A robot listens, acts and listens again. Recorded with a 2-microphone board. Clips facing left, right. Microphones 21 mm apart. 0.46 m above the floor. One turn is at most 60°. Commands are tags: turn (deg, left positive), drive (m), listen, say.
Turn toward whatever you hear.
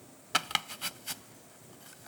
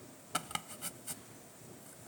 <turn deg="60"/>
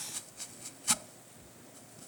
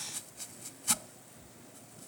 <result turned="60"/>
<turn deg="10"/>
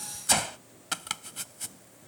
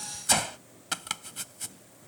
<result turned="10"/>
<say>Facing the chopping.</say>